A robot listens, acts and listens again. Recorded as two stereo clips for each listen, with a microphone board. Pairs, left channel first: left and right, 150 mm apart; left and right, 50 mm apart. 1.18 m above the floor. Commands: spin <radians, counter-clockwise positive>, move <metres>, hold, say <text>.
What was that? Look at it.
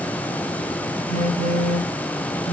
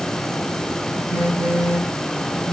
spin -1.05
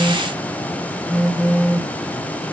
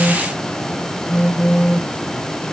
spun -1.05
say Facing the phone buzzing.